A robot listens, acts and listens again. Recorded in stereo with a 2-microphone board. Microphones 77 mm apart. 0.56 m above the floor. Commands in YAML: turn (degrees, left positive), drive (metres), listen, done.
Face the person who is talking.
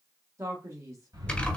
turn: -40
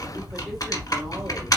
listen: true
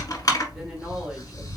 listen: true
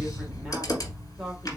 done: "I heard a man speaking, but can't make it out now. It was about straight ahead or 100° right."